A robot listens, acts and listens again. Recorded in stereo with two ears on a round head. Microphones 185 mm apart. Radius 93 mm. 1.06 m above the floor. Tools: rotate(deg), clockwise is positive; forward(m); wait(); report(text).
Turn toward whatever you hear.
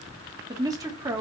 rotate(30)
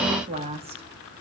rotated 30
rotate(150)
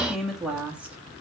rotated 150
report("Found it: a woman speaking, straight ahead, 2 to 4 m away.")